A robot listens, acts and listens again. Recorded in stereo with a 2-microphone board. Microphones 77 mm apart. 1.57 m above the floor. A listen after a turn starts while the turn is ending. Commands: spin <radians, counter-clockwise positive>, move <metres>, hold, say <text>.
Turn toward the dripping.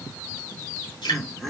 spin 1.57
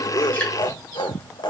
hold
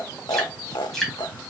say Facing the dripping, 2 to 4 m away.